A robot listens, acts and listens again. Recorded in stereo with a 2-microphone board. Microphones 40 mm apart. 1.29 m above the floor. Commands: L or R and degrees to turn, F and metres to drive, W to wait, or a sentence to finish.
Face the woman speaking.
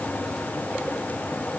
W
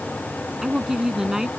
R30
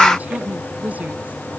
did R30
W
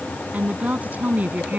R140
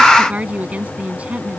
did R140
R35
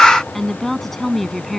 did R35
Facing the woman speaking.